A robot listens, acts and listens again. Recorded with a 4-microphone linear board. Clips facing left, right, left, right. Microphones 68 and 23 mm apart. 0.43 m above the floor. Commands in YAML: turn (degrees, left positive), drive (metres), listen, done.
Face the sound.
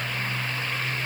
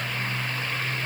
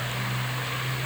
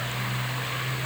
listen: true
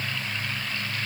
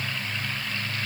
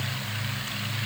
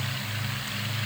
listen: true
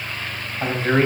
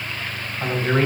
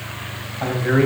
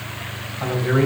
turn: 20
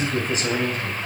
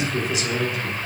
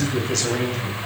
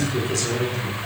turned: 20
turn: 135
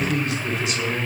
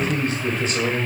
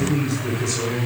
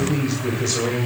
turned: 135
turn: -45
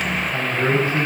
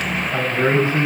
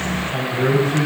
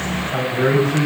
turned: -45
turn: -25
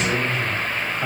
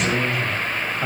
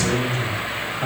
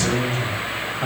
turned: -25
done: "Facing the man speaking."